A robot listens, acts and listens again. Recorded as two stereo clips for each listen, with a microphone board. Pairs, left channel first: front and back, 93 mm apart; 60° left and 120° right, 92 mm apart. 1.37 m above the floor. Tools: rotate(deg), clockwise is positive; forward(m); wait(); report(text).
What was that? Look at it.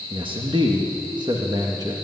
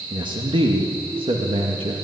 rotate(135)
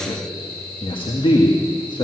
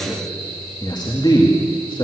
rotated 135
rotate(-30)
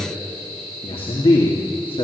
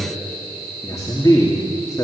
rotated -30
report("Facing the man speaking, 2 to 4 m away.")